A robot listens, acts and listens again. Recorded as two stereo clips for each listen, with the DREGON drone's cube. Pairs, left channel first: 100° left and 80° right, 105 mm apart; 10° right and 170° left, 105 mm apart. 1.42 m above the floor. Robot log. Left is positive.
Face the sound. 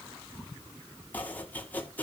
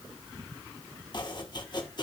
note: The chopping: 30° left.
cmd yaw +30
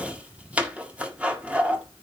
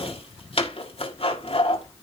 end: Facing the chopping, 1 to 2 m away.